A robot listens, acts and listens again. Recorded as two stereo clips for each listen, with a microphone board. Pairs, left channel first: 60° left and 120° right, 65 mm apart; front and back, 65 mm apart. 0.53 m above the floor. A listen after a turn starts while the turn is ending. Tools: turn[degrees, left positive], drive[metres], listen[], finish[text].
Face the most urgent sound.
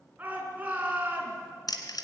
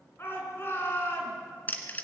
Thought: The shout: 55° right.
Action: turn[-55]
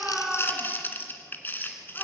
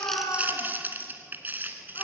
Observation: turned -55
Action: listen[]
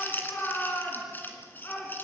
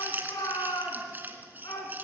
Action: finish[Found it: a shout, straight ahead.]